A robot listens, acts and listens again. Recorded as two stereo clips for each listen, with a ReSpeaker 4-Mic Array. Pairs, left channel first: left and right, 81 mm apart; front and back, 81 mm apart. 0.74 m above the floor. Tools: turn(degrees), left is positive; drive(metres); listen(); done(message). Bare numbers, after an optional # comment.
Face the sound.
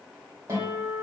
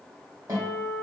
# The guitar: 140° right.
turn(-140)
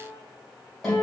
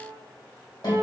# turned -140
done("Found it: a guitar, straight ahead.")